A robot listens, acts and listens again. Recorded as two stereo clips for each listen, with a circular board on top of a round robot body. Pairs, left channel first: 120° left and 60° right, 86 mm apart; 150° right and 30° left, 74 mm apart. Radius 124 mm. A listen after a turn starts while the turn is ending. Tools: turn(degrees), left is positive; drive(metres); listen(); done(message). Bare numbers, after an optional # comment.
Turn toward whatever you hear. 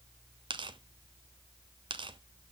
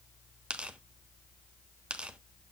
# The tearing paper: 45° right.
turn(-45)
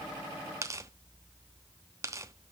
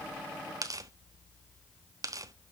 done("Facing the tearing paper, 1 to 2 m away.")